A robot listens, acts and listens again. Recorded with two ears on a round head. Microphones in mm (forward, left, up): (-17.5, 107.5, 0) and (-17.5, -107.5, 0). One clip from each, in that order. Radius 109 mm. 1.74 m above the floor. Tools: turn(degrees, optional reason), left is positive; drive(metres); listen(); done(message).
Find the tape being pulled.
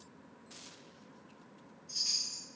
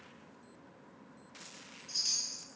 listen()
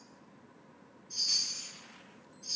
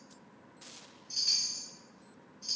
listen()
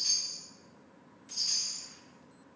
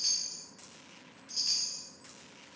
done("I can't make out tape being pulled, only a chime.")